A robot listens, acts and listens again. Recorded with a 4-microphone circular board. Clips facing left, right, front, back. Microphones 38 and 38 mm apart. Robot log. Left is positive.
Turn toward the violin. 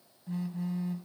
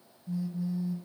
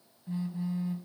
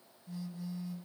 cmd idle
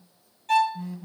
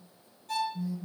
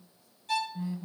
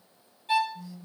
note: The violin: 115° left.
cmd yaw +115
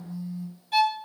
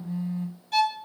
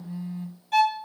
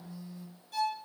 note: The violin is now 10° left.
cmd yaw +10
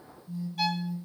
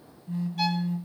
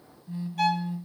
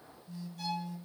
end: Facing the violin, 1 to 2 m away.